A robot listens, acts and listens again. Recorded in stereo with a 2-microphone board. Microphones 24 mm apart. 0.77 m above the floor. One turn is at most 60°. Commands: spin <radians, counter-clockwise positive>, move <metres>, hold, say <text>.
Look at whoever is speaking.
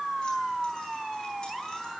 hold
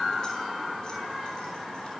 hold
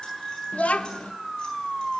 spin 1.05
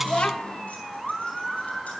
spin 0.79
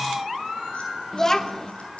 spin 0.26
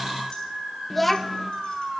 say Facing the child speaking.